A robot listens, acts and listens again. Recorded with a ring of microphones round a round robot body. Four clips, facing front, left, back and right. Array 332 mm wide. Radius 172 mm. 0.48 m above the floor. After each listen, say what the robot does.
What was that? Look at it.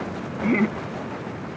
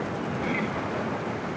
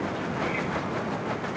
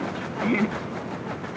Turn 30° right.
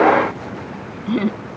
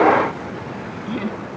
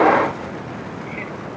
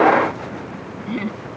Found it: laughter, straight ahead.